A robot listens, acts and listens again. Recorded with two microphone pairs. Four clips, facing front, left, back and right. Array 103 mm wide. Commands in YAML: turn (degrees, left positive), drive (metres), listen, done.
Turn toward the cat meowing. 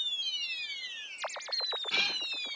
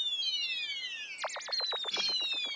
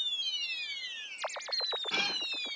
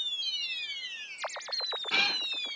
turn: -105
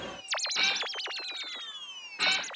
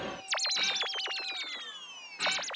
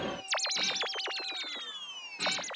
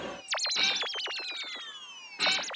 turn: 10
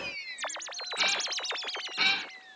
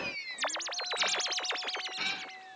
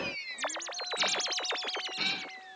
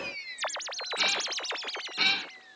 done: "Facing the cat meowing."